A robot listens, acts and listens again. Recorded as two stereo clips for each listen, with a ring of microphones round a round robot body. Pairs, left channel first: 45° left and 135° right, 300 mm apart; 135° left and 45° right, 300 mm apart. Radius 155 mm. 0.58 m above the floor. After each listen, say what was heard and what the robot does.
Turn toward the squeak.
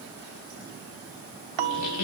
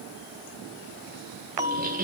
The squeak: 15° left. Turn 15° left.
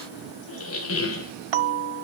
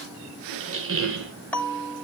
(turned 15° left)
Facing the squeak.